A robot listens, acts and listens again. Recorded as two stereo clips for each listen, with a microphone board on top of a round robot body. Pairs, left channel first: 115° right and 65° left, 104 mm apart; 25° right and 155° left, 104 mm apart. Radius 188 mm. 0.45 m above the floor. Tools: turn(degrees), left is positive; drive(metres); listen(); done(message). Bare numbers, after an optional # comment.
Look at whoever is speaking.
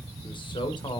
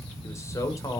# The man speaking: 75° right.
turn(-75)
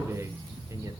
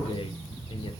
# The man speaking is now 10° left.
turn(10)
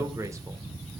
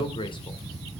# The man speaking is now 10° left.
turn(10)
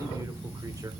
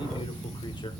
listen()
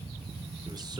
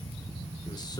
listen()
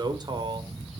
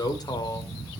# The man speaking is now 30° left.
turn(30)
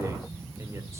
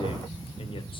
listen()
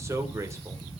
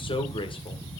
# The man speaking is now 10° left.
turn(10)
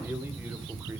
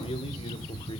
done("Facing the man speaking.")